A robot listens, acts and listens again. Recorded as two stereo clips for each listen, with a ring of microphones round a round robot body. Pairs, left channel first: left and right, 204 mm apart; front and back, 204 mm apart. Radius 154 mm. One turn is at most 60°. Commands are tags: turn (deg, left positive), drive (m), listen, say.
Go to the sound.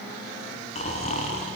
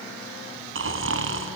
<turn deg="60"/>
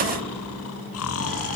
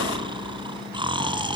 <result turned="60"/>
<turn deg="60"/>
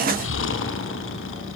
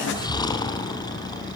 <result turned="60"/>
<turn deg="60"/>
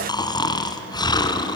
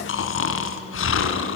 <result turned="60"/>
<turn deg="20"/>
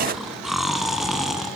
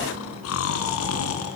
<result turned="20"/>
<drive m="1.0"/>
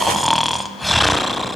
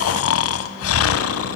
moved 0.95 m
<drive m="1.0"/>
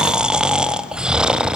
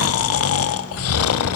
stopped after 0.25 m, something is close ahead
<say>Arrived at the snoring, straight ahead.</say>